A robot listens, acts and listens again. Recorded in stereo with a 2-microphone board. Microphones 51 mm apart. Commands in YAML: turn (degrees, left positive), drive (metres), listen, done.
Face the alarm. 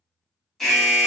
turn: 30
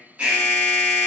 turn: -25
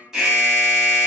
turn: -10
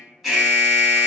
done: "Facing the alarm, 1 to 2 m away."